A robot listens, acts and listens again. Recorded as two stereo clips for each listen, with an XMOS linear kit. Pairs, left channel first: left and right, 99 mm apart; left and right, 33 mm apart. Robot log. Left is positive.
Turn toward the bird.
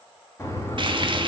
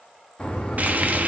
note: The bird: about 30° left or 150° left.
cmd yaw +30
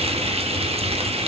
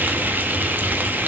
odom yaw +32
cmd idle
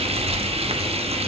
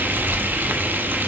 end: Facing the bird.